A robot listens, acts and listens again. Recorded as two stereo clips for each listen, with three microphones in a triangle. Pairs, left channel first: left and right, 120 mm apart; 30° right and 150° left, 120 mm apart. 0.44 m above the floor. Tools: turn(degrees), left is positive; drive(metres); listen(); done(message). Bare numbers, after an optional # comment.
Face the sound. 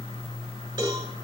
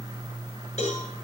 listen()
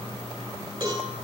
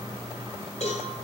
# The cowbell: 35° right.
turn(-35)
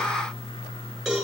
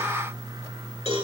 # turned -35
done("Facing the cowbell, over 4 m away.")